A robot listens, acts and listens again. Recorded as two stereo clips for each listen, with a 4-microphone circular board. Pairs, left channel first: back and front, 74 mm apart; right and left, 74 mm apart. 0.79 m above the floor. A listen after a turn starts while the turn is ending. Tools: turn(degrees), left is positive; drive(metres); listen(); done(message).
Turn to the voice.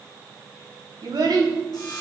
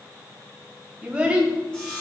turn(degrees=15)
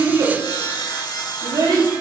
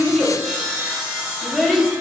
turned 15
done("Found it: a child speaking, straight ahead, 2 to 4 m away.")